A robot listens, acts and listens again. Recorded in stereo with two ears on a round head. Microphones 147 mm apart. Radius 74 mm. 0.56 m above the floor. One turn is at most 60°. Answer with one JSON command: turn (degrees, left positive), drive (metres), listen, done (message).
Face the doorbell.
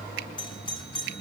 {"turn": 30}
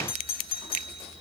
{"turn": 60}
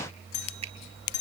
{"turn": 60}
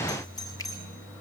{"turn": 25}
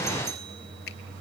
{"listen": true}
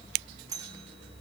{"turn": -20}
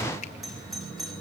{"done": "Facing the doorbell."}